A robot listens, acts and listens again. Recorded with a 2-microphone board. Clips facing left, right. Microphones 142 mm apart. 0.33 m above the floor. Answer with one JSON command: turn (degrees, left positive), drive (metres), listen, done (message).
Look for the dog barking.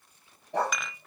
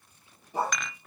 {"turn": 90}
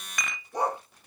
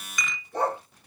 {"turn": 15}
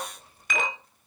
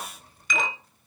{"listen": true}
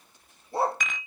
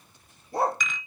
{"turn": 30}
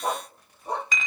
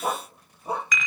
{"turn": -10}
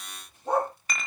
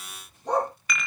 {"done": "Facing the dog barking."}